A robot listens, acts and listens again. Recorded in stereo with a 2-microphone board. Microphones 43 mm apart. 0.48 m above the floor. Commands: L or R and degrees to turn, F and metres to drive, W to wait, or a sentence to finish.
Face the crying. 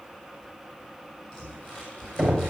W
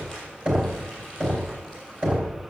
W
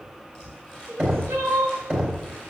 R60
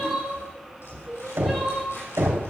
Found it: crying, straight ahead.